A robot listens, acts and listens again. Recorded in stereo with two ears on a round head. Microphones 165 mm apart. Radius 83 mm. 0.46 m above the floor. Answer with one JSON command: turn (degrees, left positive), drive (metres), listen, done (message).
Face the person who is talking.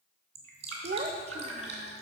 {"turn": -35}
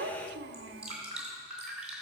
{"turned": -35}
{"turn": -110}
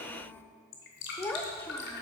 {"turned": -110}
{"turn": 15}
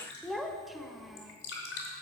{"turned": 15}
{"done": "Found it: a child speaking, straight ahead, under 1 m away."}